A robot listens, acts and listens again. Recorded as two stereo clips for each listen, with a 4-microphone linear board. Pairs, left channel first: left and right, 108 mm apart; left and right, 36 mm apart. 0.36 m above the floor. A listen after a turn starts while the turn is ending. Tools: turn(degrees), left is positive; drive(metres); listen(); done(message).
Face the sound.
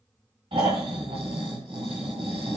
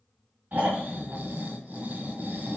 turn(degrees=-60)
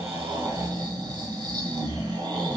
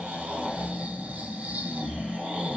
turn(degrees=-50)
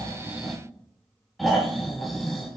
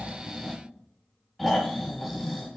done("Found it: snoring, straight ahead, 1 to 2 m away.")